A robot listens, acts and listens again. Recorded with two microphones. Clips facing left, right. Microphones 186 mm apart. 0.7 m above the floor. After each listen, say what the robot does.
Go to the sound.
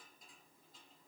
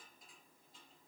Keep listening.
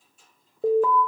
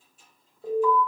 Turn 75° left.
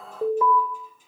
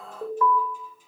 Turn 25° left.
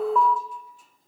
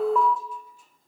Drive 1.0 m forward.
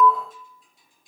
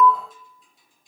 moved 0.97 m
Turn 10° right.
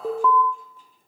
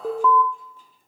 Drive 1.0 m forward.
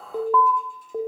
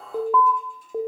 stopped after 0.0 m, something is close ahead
I am next to the alarm.